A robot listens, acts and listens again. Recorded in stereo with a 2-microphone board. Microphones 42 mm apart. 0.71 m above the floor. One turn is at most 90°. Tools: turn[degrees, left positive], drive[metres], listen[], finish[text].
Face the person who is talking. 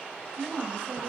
Thought: The woman speaking: about 35° left or 145° left.
Action: turn[35]
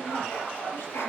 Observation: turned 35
Action: listen[]
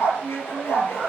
Thought: So it is at 110° left.
Action: turn[90]
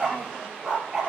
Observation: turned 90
Thought: Nothing new. It was at 20° left.
Action: turn[20]
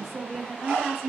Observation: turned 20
Thought: The woman speaking is now 10° left.
Action: turn[10]
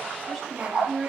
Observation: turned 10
Action: finish[Facing the woman speaking.]